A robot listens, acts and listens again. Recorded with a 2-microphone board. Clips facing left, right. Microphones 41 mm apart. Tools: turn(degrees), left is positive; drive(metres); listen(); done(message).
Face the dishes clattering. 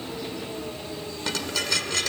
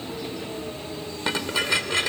turn(degrees=-25)
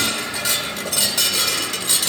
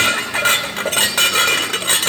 turn(degrees=-125)
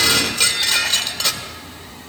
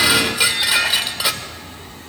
turn(degrees=-10)
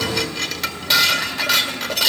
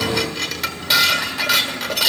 done("Facing the dishes clattering, 1 to 2 m away.")